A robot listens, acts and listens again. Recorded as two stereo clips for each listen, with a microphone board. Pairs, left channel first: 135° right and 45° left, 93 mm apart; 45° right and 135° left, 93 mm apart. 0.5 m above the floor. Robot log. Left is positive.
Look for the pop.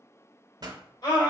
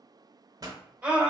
note: The pop: 85° left.
cmd yaw +85
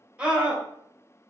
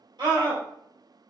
end: Facing where the pop came from. I can't hear it now.